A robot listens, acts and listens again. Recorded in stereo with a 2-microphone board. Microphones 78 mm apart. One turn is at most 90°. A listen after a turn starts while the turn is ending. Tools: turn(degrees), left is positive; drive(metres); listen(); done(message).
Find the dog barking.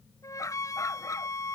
turn(degrees=45)
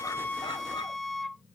listen()
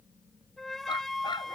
turn(degrees=90)
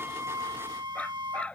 turn(degrees=15)
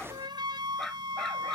done("Found it: a dog barking, straight ahead.")